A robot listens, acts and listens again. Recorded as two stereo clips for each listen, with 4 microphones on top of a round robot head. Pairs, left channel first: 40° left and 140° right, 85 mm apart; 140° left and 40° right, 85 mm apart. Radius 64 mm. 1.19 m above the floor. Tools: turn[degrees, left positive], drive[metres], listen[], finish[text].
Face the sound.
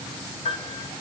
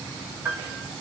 Thought: The piano: 25° left.
Action: turn[25]
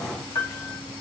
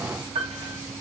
Thought: The piano is now 20° right.
Action: turn[-20]
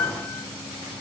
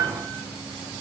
Action: finish[Found it: a piano, straight ahead, 1 to 2 m away.]